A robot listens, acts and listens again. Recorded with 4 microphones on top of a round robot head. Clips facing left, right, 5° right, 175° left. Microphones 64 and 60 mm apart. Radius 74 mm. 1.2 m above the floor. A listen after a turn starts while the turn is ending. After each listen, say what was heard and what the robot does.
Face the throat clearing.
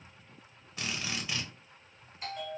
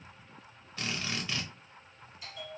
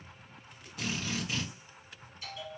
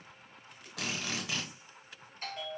Keep listening.
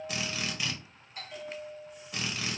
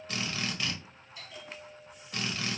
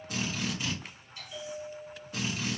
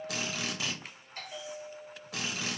Keep listening.
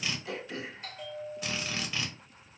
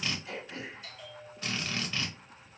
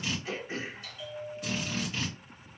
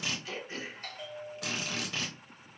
The throat clearing: 60° left. Turn 60° left.
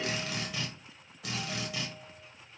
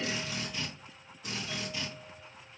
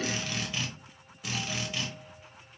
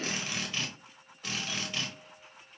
Keep listening.
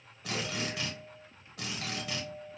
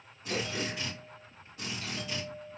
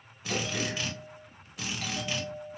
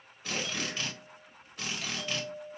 Keep listening.
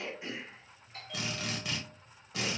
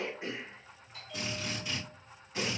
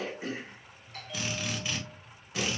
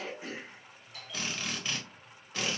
The throat clearing is now 30° right. Turn 30° right.
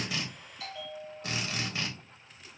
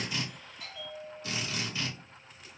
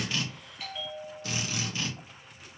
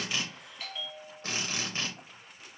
Keep listening.
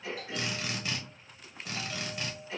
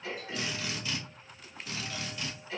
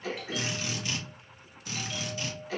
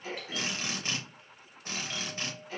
The throat clearing is now 10° left. Turn 10° left.
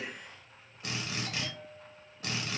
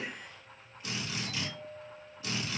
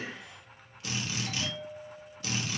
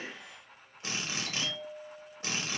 Found it: throat clearing, straight ahead.